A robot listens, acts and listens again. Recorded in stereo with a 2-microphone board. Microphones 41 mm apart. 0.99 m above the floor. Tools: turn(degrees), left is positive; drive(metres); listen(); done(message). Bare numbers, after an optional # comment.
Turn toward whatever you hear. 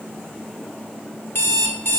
# The alarm clock: about 65° left or 115° left.
turn(65)
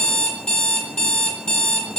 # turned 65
# So it is at 20° left.
turn(20)
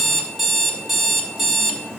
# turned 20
done("Facing the alarm clock, 1 to 2 m away.")